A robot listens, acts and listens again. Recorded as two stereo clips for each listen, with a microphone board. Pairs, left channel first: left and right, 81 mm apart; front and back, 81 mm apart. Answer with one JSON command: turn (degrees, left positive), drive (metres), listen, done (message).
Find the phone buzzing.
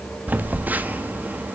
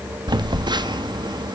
{"turn": -160}
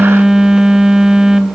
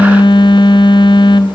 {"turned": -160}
{"turn": -10}
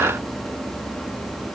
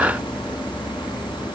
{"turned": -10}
{"listen": true}
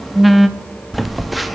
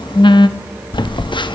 {"done": "Facing the phone buzzing, under 1 m away."}